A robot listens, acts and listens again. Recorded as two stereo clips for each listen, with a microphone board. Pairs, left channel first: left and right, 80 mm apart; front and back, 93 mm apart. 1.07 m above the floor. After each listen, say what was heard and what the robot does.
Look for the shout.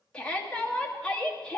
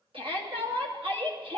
The shout: 170° left. Turn 170° left.
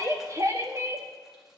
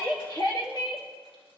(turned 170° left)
The shout is now 40° right. Turn 40° right.
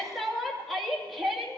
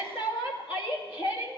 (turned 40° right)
Found it: a shout, straight ahead.